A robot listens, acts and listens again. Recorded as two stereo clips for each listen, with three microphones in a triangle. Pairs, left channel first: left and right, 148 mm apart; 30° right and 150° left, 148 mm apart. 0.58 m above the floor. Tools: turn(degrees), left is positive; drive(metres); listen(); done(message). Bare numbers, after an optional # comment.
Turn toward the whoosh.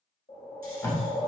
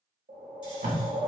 # The whoosh: 130° left.
turn(130)
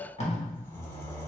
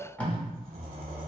listen()
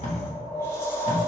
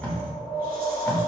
# The whoosh is now 15° left.
turn(15)
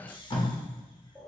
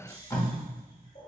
listen()
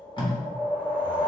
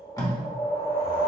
done("Facing the whoosh.")